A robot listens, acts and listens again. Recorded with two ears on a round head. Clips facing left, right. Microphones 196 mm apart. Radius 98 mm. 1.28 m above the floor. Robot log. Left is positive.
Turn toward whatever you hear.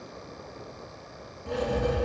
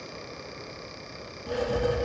cmd yaw -30
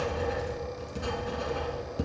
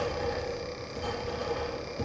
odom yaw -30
note: So it is at 25° left.
cmd yaw +25
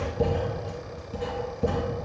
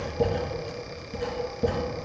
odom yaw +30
end: Facing the writing.